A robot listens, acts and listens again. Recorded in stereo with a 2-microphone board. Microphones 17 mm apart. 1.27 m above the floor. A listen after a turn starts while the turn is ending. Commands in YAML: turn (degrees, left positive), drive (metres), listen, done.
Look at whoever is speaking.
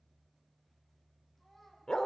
turn: 15
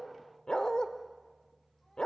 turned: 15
listen: true
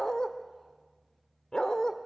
listen: true
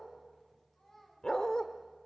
turn: 150
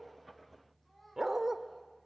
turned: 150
turn: 15
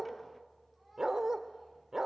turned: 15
listen: true
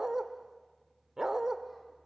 listen: true
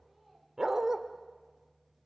done: "Found it: a child speaking, straight ahead."